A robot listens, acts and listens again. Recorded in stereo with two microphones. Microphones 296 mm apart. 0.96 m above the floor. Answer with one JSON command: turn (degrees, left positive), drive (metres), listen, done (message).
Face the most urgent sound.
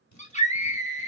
{"turn": 25}
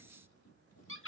{"turn": 135}
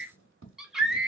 {"done": "Found it: a scream, straight ahead."}